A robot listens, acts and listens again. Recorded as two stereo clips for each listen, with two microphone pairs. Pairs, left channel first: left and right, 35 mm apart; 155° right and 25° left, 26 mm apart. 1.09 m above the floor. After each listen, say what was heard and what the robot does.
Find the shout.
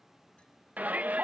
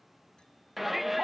The shout: 60° right. Turn 60° right.
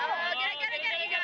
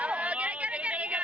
Facing the shout.